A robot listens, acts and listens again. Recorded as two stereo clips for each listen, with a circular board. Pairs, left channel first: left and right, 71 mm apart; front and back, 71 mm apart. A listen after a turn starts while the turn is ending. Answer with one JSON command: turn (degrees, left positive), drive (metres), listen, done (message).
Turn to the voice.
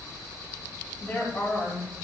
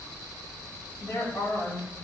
{"turn": 25}
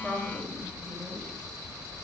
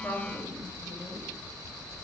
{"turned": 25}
{"listen": true}
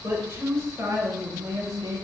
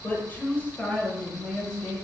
{"turn": -75}
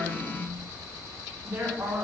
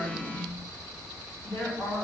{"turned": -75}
{"turn": -40}
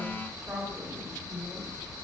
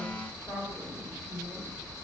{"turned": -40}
{"done": "Facing the woman speaking."}